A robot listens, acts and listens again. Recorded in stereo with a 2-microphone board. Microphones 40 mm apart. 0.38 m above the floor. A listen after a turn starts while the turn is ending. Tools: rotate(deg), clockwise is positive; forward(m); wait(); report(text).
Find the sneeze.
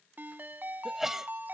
rotate(30)
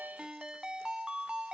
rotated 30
wait()
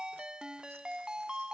report("I heard a sneeze, but can't make it out now. It was about 20° left or 140° right.")